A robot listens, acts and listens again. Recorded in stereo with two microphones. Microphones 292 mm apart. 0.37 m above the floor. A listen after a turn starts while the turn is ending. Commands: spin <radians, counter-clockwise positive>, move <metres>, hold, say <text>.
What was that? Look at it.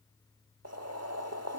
spin -1.05
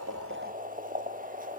spin -0.61
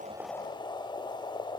spin 0.35
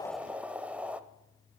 say Found it: boiling, straight ahead, under 1 m away.